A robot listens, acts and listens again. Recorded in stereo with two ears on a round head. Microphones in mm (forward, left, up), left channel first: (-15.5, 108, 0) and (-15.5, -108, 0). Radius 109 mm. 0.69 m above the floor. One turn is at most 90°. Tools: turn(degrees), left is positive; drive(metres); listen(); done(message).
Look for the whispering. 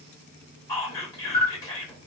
turn(degrees=30)
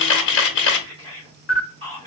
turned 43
turn(degrees=-25)
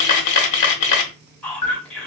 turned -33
turn(degrees=10)
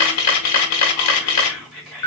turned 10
done("Found it: whispering, straight ahead.")